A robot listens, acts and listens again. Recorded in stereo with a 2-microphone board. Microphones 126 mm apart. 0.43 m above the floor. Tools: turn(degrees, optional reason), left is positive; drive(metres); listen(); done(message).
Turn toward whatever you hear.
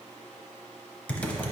turn(degrees=30)
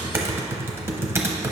turn(degrees=-20, reason="So it is at 20° right.")
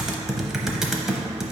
done("Facing the typing on a keyboard, under 1 m away.")